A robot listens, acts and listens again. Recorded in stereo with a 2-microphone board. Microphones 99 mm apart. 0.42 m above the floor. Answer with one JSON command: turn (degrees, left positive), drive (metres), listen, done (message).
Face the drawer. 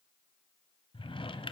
{"turn": 60}
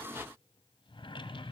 {"turn": 60}
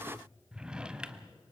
{"turn": -10}
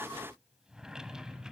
{"done": "Facing the drawer, under 1 m away."}